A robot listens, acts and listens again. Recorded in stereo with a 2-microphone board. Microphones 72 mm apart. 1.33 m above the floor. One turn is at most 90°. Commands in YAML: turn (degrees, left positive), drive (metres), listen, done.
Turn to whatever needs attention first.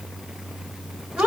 listen: true
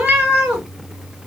listen: true
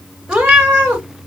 done: "I can't make out anything urgent, only a cat meowing."